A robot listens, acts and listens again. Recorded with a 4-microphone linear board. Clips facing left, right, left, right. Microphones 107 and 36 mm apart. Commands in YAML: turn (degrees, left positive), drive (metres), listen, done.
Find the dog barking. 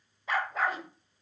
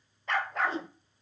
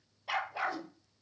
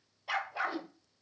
turn: 30
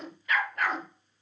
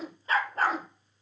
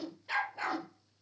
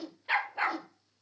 turn: -35
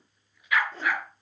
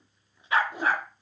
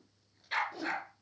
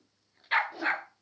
turn: -40
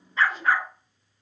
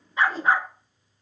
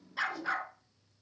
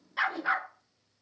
turn: -25
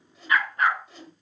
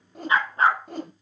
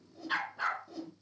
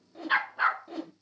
turn: -35
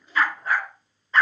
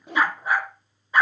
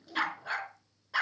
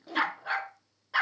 turn: -15
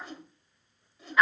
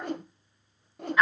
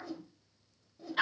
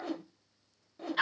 done: "Facing the dog barking, 1 to 2 m away."